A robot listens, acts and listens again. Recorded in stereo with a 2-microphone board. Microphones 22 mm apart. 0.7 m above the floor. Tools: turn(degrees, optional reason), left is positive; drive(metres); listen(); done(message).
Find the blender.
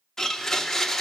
turn(degrees=20, reason="The blender: about 20° left or 160° left.")
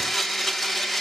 done("Facing the blender.")